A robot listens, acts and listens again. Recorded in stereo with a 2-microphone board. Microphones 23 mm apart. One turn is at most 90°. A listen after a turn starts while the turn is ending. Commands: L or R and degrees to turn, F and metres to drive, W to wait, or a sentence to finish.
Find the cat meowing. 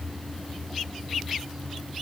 W
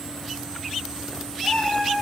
L25
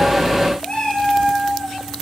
L90
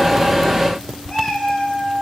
L35
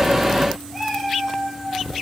L10
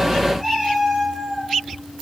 Facing the cat meowing, over 4 m away.